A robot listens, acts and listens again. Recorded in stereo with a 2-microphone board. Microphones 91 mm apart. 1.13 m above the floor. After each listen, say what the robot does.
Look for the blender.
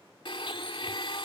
Turn 90° left.
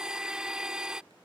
Turn 10° right.
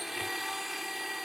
Facing the blender.